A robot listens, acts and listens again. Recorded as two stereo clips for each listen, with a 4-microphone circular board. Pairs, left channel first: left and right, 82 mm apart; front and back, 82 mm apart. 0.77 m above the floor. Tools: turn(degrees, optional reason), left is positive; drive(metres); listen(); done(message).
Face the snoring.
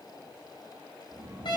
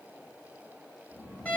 turn(degrees=-70, reason="The snoring: 70° right.")
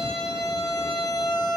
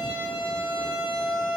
listen()
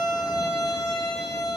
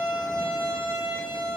listen()
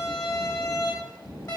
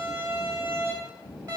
turn(degrees=-15, reason="The snoring is now 15° right.")
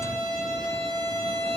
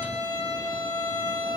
listen()
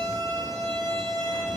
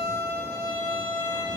listen()
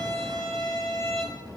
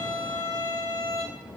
done("Facing the snoring, 2 to 4 m away.")